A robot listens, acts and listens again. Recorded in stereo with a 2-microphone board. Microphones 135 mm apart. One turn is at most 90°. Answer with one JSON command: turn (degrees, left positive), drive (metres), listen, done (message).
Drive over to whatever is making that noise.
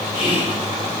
{"turn": 45}
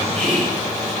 {"turn": 85}
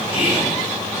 {"turn": -10}
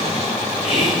{"drive": 1.0}
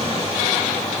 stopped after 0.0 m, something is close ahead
{"listen": true}
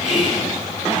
{"done": "Something is in my way. I am facing the whispering but have not reached it."}